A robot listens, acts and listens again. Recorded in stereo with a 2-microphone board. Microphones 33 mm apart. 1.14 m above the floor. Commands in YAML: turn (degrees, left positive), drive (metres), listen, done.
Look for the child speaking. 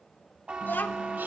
turn: 90
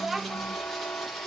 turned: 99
done: "Found it: a child speaking, straight ahead, under 1 m away."